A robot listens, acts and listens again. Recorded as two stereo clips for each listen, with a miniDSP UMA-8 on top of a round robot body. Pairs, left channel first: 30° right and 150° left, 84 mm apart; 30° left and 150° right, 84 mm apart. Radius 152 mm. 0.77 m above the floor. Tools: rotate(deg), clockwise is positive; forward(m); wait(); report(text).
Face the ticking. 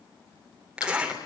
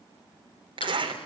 rotate(-15)
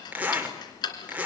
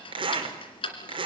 rotate(-10)
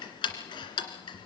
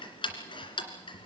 report("Found it: ticking, straight ahead, 2 to 4 m away.")